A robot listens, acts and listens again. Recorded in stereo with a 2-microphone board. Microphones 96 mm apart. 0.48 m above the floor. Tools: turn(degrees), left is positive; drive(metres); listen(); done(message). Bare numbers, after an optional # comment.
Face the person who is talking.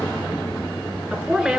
turn(-30)
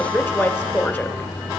# So it is at 25° left.
turn(25)
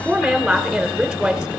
done("Found it: a woman speaking, straight ahead.")